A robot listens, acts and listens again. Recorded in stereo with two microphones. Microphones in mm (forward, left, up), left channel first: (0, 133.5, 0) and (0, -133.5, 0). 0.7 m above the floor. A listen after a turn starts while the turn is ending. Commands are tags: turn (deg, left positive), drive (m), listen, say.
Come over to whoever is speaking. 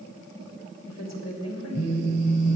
<turn deg="75"/>
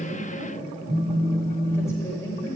<turn deg="10"/>
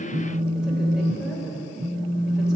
<drive m="1.0"/>
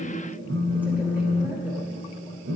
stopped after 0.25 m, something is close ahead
<say>Blocked. The woman speaking is further on, straight ahead.</say>